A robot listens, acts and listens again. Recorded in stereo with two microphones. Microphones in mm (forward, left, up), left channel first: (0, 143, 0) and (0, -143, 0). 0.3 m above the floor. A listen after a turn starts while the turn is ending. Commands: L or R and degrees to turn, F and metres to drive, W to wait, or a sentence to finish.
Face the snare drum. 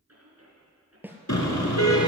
R30
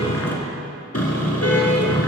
W
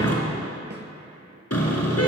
W
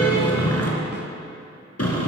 I heard a snare drum, but can't make it out now. It was about 25° left or 145° right.